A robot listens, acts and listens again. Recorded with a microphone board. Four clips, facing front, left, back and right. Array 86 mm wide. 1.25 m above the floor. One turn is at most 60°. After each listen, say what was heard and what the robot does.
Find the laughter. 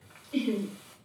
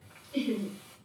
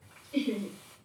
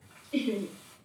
The laughter: 60° right. Turn 60° right.
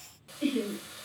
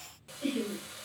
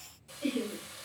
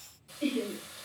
The laughter is now 25° right. Turn 25° right.
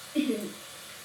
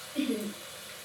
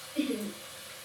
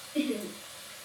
The laughter is now 10° right. Turn 10° right.
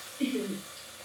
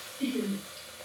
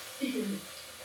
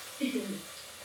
Found it: laughter, straight ahead.